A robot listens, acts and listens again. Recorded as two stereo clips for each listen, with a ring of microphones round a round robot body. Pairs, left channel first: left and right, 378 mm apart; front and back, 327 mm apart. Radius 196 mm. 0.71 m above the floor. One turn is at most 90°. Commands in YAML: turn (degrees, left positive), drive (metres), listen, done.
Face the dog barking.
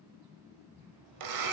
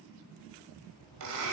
listen: true
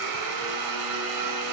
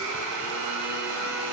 listen: true
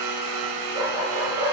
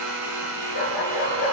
turn: -10
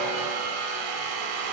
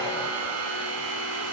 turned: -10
listen: true
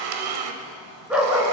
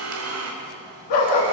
done: "Found it: a dog barking, straight ahead."